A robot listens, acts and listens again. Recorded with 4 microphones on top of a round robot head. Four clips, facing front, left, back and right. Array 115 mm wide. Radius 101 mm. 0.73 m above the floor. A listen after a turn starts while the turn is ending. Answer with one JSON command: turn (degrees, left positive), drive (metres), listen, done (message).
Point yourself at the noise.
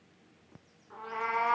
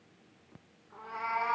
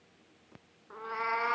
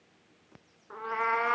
{"turn": -115}
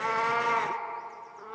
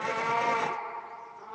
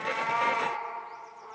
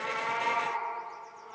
{"turn": 15}
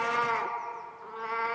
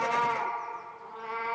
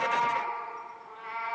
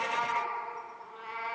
{"done": "Facing the cat meowing."}